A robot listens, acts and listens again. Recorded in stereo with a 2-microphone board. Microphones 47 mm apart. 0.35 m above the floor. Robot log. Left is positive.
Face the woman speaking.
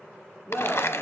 cmd yaw +30
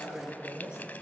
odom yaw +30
note: So it is at 15° right.
cmd yaw -15
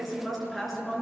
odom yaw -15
end: Found it: a woman speaking, straight ahead, over 4 m away.